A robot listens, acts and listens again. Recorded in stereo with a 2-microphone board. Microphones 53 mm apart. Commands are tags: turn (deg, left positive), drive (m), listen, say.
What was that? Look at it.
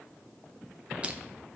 <listen/>
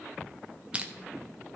<turn deg="-20"/>
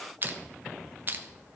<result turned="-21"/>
<turn deg="-135"/>
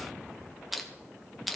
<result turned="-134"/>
<say>Found it: crushing, straight ahead.</say>